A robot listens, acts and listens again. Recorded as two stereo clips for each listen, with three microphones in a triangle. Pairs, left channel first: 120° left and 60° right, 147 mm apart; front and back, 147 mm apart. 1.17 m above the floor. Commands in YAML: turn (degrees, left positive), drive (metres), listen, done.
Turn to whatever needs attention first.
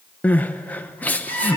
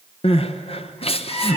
turn: 40
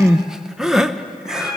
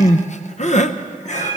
turn: 25
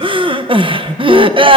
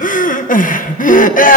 turn: -10
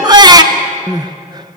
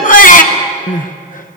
done: "Facing the crying, under 1 m away."